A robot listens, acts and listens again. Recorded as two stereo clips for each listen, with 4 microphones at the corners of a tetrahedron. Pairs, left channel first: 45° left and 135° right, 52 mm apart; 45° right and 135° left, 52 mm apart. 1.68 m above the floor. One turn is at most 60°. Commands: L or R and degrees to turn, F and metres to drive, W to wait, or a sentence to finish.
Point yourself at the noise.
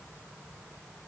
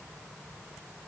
W
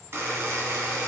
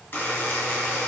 R60
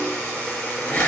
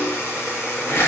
R15
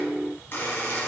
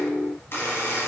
Found it: a buzzer, straight ahead.